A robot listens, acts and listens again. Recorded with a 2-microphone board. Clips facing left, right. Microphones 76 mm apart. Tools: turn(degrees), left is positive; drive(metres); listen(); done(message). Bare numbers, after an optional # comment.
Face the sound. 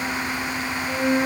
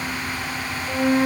# The flute: about 20° right or 160° right.
turn(-20)
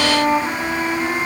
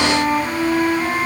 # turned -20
done("Found it: a flute, straight ahead.")